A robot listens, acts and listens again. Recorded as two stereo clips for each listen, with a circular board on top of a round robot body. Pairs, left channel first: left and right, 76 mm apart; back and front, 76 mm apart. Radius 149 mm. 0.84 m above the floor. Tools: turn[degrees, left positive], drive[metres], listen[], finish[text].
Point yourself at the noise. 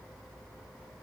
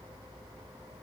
Action: listen[]
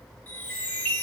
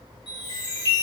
Thought: The chime: 160° left.
Action: turn[160]
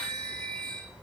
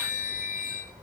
Thought: The chime is now 15° left.
Action: turn[15]
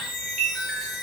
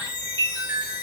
Action: finish[Found it: a chime, straight ahead, 1 to 2 m away.]